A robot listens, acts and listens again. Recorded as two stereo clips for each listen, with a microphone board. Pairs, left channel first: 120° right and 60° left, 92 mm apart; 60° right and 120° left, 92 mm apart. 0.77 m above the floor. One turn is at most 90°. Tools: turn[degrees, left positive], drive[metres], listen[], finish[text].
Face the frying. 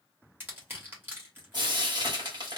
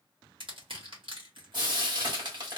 Thought: The frying: 95° left.
Action: turn[90]
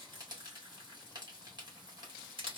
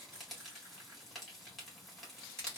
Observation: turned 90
Thought: The frying is now 25° left.
Action: turn[25]
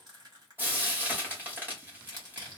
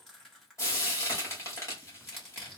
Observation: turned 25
Action: finish[Found it: frying, straight ahead.]